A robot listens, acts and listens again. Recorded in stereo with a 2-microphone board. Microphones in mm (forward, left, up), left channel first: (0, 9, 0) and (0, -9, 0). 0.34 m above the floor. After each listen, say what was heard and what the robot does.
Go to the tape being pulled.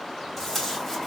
The tape being pulled: about 15° left or 165° left. Turn 15° left.
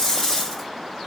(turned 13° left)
So it is at 155° left. Turn 155° left.
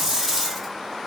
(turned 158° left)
The tape being pulled is now 10° right. Turn 10° right.
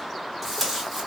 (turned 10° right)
Drive 1.0 m forward.
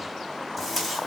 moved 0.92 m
The tape being pulled is now 10° left. Turn 10° left.
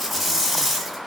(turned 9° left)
Drive 1.0 m forward.
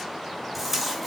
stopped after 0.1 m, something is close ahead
Arrived at the tape being pulled, straight ahead.